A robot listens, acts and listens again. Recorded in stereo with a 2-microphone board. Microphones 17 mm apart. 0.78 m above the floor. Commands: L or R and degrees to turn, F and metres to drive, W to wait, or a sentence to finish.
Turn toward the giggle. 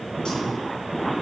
W
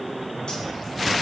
W
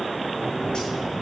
I can't make out a giggle.